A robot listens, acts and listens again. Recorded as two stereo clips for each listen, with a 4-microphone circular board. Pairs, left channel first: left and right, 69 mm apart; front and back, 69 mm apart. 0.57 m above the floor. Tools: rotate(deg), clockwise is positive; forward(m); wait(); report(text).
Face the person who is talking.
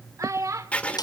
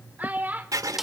rotate(120)
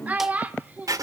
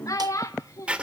rotate(25)
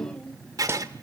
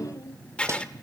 wait()
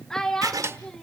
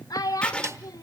rotate(-10)
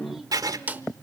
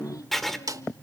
wait()
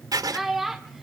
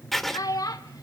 report("Facing the child speaking, 1 to 2 m away.")